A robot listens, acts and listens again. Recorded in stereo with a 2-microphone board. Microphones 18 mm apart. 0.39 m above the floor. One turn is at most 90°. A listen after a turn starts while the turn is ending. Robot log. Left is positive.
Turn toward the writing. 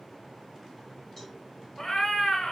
cmd idle
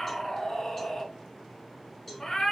cmd idle
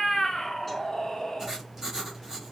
note: The writing: about 20° right or 160° right.
cmd yaw -20
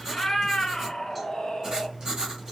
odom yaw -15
note: So it is at 150° right.
cmd yaw -90
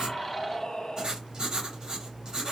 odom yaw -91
note: The writing is now 50° right.
cmd yaw -50
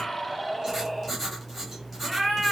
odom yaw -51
end: Found it: writing, straight ahead.